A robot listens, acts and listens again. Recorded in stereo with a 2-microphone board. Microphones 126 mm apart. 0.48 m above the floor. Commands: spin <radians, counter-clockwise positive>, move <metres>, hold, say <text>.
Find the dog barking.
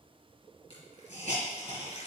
hold
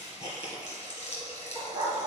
spin -0.44
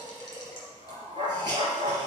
spin -2.36
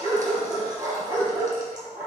spin -0.35
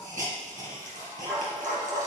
say Found it: a dog barking, straight ahead, over 4 m away.